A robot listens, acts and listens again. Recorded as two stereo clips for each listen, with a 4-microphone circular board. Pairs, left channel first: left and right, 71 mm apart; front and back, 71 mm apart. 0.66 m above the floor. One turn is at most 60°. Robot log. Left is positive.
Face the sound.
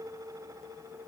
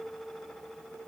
cmd idle
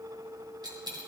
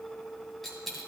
note: The dropped coin: 90° right.
cmd yaw -60
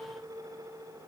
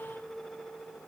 note: Nothing new. It was at 30° right.
cmd yaw -30
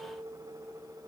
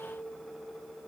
end: I heard a dropped coin from this way, but can't make it out now.